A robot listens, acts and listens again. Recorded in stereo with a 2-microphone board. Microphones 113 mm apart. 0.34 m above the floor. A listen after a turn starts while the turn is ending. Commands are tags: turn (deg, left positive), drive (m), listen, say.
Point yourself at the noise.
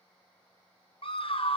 <turn deg="55"/>
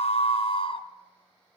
<turn deg="60"/>
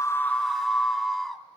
<say>Facing the scream, 2 to 4 m away.</say>